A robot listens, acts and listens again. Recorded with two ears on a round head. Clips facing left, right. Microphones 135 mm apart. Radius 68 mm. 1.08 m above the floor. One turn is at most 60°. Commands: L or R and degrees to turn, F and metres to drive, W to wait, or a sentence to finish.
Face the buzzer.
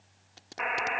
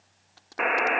R60
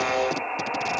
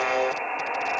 Found it: a buzzer, straight ahead.